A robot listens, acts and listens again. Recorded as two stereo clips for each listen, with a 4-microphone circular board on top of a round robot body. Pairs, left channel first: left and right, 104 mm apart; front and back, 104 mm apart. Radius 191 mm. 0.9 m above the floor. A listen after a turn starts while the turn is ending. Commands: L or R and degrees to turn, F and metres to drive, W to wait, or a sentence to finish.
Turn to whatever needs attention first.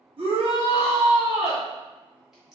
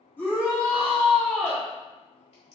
R70
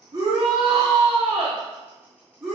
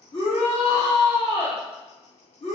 Facing the shout.